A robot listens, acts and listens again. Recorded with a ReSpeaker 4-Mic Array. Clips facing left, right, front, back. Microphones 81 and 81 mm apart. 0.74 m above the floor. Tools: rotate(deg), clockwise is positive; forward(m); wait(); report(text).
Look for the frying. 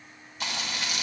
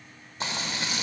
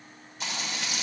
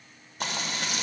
rotate(150)
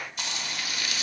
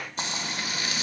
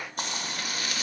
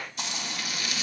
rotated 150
rotate(35)
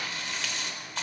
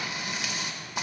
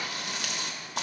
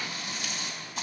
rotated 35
rotate(15)
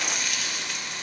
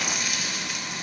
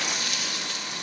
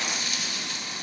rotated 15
report("Found it: frying, straight ahead.")